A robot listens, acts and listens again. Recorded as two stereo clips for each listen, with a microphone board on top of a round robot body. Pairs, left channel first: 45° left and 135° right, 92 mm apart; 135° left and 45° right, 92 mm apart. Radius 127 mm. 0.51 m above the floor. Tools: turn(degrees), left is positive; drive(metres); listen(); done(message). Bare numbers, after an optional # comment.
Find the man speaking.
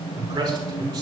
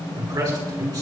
# The man speaking: 90° right.
turn(-90)
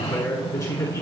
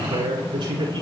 # The man speaking is now 10° right.
turn(-10)
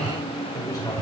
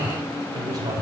done("Facing the man speaking, over 4 m away.")